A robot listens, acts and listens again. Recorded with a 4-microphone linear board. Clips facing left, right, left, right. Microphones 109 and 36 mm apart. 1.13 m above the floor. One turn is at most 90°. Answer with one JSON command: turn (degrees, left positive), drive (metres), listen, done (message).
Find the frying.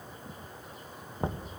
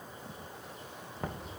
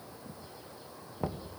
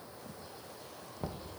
{"listen": true}
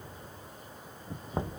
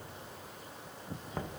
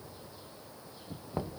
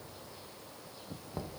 {"listen": true}
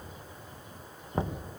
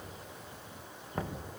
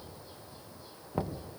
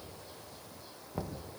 {"done": "I can't make out frying to turn to."}